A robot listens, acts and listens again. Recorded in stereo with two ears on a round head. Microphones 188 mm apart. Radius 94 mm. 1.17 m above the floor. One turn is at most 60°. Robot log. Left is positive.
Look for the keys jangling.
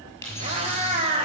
cmd yaw +30
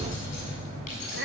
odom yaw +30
note: So it is at 145° left.
cmd yaw +60
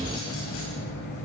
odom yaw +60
note: Nothing new. It was at 85° left.
cmd yaw +60
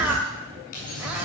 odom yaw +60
note: The keys jangling is now 40° left.
cmd yaw +40
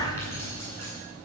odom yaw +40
note: The keys jangling is now 15° left.
cmd yaw +15
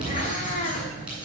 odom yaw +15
end: Facing the keys jangling.